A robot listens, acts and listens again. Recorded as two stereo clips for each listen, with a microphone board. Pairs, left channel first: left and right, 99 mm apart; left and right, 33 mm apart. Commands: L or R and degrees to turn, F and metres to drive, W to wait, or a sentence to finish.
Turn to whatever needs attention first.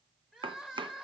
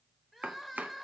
R30
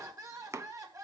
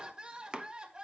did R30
R145
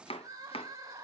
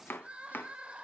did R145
R35
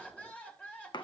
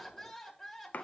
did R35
L10
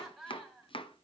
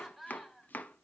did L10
Found it: crying, straight ahead, 2 to 4 m away.